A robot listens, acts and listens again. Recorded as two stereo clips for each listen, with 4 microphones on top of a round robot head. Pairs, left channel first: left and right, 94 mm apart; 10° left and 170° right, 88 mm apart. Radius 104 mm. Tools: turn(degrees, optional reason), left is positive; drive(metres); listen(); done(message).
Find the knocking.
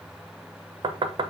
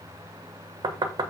turn(degrees=-130, reason="The knocking: 130° right.")
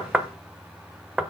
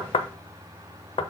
turn(degrees=-10, reason="The knocking is now 10° right.")
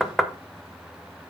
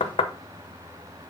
done("Found it: knocking, straight ahead.")